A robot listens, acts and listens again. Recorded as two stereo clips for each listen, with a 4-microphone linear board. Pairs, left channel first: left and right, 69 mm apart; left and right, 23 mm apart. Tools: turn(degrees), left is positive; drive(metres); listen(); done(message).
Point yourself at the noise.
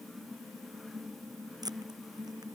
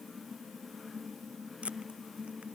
turn(degrees=-75)
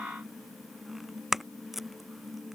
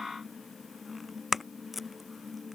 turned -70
done("Facing the tape being pulled.")